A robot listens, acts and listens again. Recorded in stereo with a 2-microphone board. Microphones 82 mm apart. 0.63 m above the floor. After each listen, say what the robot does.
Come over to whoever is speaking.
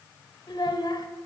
Turn 65° left.
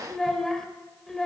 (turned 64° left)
Drive 1.0 m forward.
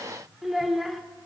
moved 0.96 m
Drive 1.0 m forward.
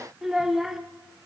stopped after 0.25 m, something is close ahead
Arrived at the child speaking, straight ahead.